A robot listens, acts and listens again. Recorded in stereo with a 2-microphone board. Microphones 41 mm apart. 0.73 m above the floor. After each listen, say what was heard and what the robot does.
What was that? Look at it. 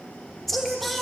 Turn 30° left.
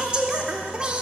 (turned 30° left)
So it is at 25° right. Turn 25° right.
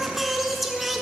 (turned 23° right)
Found it: singing, straight ahead, 1 to 2 m away.